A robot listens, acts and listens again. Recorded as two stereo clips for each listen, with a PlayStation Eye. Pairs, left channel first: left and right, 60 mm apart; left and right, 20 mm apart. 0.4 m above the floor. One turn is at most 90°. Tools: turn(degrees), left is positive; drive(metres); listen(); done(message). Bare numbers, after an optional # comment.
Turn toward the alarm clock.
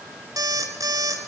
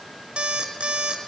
turn(-90)
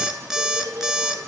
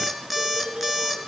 # So it is at 10° right.
turn(-10)
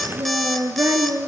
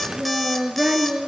listen()
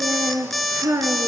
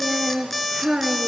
done("Found it: an alarm clock, straight ahead.")